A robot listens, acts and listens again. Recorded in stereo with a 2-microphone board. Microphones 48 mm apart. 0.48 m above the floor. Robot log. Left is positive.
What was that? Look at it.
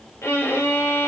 note: The violin: about 65° left or 115° left.
cmd yaw +65
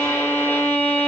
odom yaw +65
note: So it is at 50° left.
cmd yaw +50
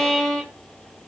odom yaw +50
note: The violin is now 10° left.
cmd yaw +10
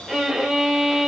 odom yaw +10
end: Facing the violin.